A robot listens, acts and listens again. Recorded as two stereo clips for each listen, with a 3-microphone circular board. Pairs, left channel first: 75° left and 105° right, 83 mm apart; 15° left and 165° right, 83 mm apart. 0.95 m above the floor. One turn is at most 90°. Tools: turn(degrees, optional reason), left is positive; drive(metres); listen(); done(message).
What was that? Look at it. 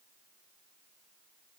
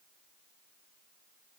listen()
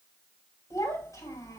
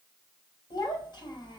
turn(degrees=35, reason="The child speaking: 35° left.")
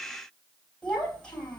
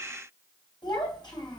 done("Found it: a child speaking, straight ahead.")